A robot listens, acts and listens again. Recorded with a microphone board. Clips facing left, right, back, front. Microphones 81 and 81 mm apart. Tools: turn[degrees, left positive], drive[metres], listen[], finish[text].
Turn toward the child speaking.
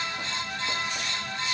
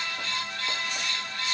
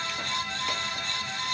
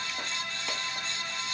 Action: listen[]
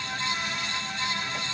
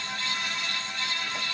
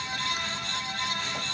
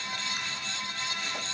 Action: listen[]
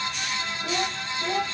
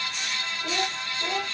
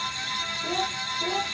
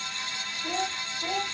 Thought: The child speaking: 160° right.
Action: turn[-160]
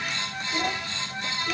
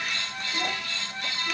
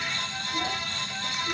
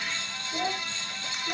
Thought: The child speaking is now 45° left.
Action: turn[45]
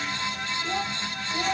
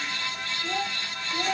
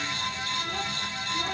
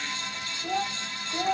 Action: finish[Found it: a child speaking, straight ahead, 1 to 2 m away.]